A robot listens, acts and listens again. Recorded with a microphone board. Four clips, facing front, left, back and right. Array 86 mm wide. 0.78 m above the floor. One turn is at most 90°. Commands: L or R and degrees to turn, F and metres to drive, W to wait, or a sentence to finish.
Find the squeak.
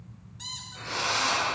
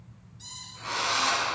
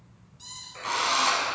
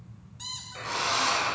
R60
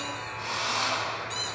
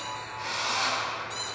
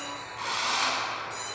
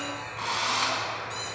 W
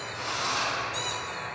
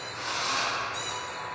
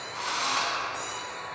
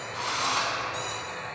W
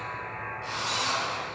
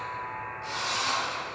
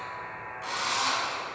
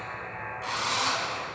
Facing where the squeak came from. I can't hear it now.